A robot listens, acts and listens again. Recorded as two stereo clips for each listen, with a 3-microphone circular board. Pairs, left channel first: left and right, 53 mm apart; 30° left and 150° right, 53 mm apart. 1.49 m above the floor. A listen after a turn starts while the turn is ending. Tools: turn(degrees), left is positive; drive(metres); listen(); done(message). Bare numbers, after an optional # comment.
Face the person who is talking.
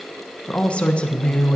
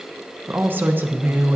# The woman speaking: 160° left.
turn(160)
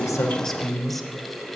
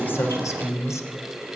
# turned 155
done("Facing the woman speaking.")